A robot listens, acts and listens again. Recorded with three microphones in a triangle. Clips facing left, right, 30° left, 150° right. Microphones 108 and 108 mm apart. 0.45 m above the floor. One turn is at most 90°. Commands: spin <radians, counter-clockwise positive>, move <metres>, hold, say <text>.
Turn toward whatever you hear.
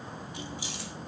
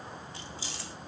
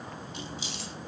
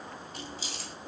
spin 1.57
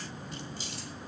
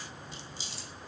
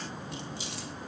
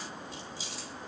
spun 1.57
spin 0.87
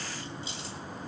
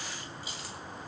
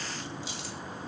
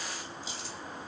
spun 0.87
spin 0.44
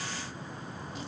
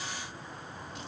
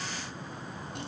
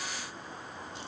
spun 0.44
hold
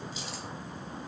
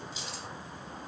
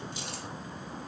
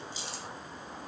say Facing the keys jangling, 2 to 4 m away.